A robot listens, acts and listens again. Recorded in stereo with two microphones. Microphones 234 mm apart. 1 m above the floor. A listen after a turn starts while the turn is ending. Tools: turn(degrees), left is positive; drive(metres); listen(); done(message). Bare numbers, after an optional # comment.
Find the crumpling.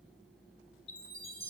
listen()
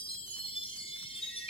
listen()
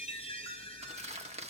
# The crumpling: about 30° right or 150° right.
turn(-30)
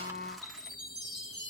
listen()
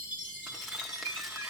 listen()
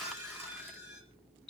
done("I heard crumpling, but can't make it out now. It was about straight ahead or 120° right.")